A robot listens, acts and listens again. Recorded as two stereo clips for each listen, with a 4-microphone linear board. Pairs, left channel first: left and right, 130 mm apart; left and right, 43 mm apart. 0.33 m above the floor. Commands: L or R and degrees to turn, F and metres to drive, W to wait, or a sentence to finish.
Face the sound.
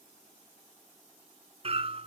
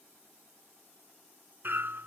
R45
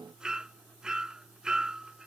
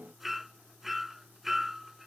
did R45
Facing the hammering.